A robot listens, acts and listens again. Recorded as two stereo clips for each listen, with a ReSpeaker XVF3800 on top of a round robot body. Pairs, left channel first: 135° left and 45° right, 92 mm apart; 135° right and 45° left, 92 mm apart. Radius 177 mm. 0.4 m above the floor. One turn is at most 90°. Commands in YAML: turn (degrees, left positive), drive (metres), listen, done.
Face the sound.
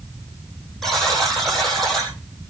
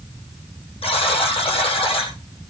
turn: -90
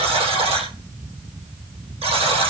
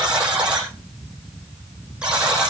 turn: -35
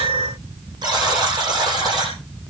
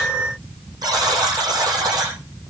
done: "Facing the buzzer."